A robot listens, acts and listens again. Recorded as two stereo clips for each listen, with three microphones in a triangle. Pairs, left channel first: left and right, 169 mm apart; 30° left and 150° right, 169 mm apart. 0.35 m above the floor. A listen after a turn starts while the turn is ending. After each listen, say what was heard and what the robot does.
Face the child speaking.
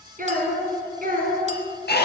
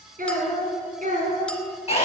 The child speaking: 115° right. Turn 115° right.
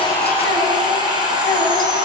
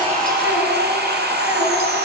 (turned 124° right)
Nothing new. It was at 10° left. Turn 10° left.
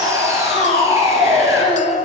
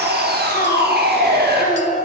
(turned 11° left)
The child speaking is now 50° left. Turn 50° left.
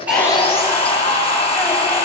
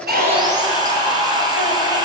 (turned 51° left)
Keep listening.
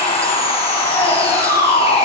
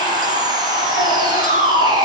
Keep listening.
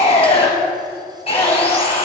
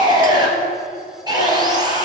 I heard a child speaking from this way, but can't make it out now.